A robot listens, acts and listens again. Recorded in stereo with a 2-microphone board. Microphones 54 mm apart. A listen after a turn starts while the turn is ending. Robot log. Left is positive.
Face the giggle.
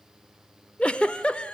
note: The giggle: about 20° left or 160° left.
cmd yaw +20
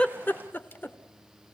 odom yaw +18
note: So it is at 140° left.
cmd yaw +140
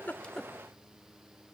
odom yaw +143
cmd idle
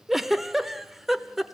end: Found it: a giggle, straight ahead, under 1 m away.